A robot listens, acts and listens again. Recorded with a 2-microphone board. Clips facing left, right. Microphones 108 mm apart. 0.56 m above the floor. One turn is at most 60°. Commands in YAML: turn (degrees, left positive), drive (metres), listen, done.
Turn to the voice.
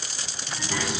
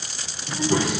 turn: -25
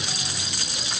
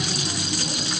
turn: -60
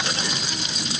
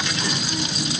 turn: -60
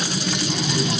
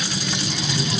turn: 15
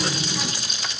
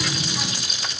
done: "Found it: a child speaking, straight ahead."